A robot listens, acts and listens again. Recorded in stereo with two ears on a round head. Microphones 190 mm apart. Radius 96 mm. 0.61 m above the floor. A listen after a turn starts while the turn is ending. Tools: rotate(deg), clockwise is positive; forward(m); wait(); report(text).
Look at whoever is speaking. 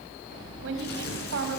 rotate(65)
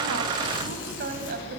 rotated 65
rotate(45)
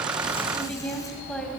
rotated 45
report("Facing the woman speaking, 2 to 4 m away.")